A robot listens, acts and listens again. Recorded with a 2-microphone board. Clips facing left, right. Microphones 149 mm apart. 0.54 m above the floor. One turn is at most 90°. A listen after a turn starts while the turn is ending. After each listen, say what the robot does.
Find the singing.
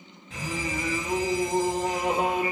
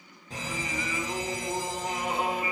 Turn 45° left.
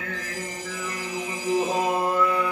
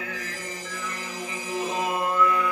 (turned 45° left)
Turn 30° left.
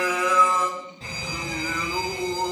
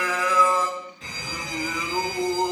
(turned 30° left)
Turn 10° right.
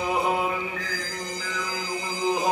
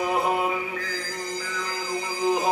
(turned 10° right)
Facing the singing, 2 to 4 m away.